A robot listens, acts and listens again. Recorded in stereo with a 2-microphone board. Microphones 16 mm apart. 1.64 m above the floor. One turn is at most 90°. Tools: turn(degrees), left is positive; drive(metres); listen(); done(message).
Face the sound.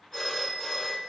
turn(degrees=50)
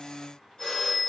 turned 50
turn(degrees=65)
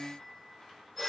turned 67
done("Facing the phone ringing.")